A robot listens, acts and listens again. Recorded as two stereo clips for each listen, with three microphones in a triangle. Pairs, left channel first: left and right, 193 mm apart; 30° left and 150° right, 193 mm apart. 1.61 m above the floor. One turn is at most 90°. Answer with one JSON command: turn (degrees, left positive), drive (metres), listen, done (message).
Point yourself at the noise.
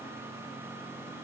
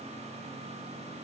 {"listen": true}
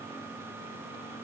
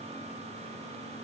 {"listen": true}
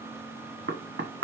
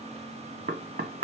{"turn": -90}
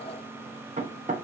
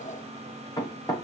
{"turn": -40}
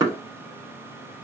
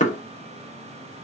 {"turn": -20}
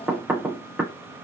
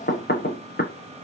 {"done": "Found it: knocking, straight ahead, 1 to 2 m away."}